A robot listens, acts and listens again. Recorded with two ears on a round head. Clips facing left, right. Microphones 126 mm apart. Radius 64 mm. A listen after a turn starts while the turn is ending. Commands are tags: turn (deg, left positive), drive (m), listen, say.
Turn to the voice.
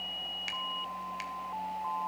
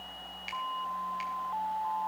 <listen/>
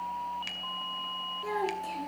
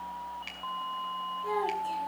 <turn deg="75"/>
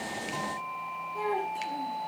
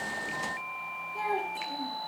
<say>Found it: a child speaking, straight ahead, over 4 m away.</say>